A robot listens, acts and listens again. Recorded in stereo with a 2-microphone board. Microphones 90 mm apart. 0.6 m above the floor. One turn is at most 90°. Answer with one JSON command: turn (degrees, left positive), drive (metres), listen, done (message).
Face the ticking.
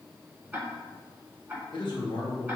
{"turn": -20}
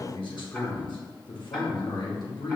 {"listen": true}
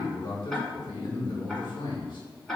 {"done": "Found it: ticking, straight ahead."}